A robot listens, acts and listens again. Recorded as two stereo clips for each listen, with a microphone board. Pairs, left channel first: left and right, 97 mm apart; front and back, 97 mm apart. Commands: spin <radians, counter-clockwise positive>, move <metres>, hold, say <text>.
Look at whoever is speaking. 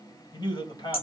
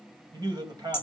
spin 2.36
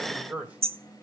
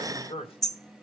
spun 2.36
spin -0.26
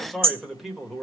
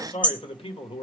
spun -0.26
say Found it: a man speaking, straight ahead.